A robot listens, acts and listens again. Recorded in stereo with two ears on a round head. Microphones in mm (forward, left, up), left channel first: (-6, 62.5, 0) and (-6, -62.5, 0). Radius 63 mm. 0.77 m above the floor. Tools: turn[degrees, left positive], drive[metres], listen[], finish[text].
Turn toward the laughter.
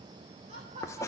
Thought: The laughter: about 45° right or 135° right.
Action: turn[-45]
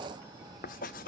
Action: listen[]
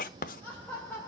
Thought: So it is at 15° left.
Action: turn[15]
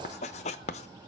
Action: listen[]
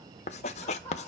Thought: The laughter is now 15° left.
Action: turn[15]
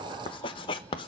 Action: listen[]
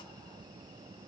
Action: listen[]
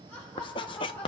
Thought: The laughter is now 15° left.
Action: turn[15]
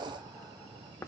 Action: listen[]
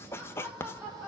Action: finish[Found it: laughter, straight ahead.]